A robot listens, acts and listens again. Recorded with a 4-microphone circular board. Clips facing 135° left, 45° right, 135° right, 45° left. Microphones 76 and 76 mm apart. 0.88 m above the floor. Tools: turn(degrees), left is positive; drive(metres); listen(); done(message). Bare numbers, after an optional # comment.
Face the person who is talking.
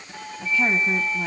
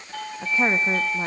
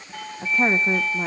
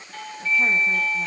# The woman speaking: 100° right.
turn(-100)
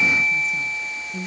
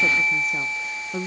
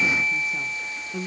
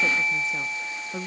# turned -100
# The woman speaking is now 20° right.
turn(-20)
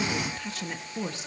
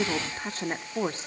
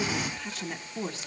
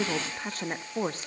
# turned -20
done("Found it: a woman speaking, straight ahead.")